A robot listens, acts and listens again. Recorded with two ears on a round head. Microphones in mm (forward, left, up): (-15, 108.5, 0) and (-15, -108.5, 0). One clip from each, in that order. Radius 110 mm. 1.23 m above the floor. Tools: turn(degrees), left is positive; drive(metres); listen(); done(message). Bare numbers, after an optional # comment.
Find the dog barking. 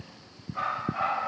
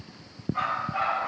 # The dog barking: about 20° right or 160° right.
turn(-20)
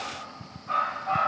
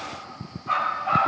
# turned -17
# The dog barking: about 35° right or 145° right.
turn(-35)
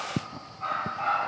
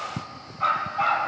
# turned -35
# So it is at 120° right.
turn(-120)
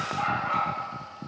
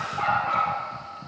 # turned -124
done("Found it: a dog barking, straight ahead, 2 to 4 m away.")